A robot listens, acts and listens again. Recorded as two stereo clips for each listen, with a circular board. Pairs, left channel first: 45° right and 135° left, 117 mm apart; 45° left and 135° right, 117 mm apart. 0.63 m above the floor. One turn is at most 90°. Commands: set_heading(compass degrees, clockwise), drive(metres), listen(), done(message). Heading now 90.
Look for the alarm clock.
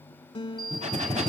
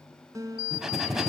set_heading(180)
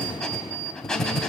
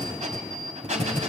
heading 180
set_heading(260)
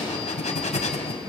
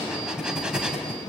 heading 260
listen()
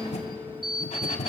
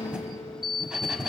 done("Facing the alarm clock.")